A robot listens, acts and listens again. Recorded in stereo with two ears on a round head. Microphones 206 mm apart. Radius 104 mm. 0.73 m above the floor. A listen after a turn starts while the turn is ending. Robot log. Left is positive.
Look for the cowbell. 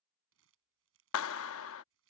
cmd idle
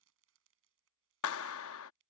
cmd idle
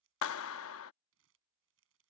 end: I can't make out a cowbell to turn to.